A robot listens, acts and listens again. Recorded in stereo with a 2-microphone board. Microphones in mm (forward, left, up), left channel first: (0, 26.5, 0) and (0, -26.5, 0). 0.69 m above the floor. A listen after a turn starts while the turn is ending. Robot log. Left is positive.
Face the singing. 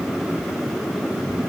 cmd idle
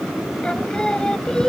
cmd yaw +30
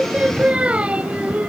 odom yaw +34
note: So it is at 25° right.
cmd yaw -25
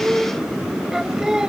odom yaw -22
note: The singing is now 10° right.
cmd yaw -10
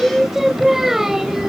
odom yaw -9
note: The singing is now 10° right.
cmd yaw -10
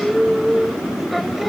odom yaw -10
end: Facing the singing.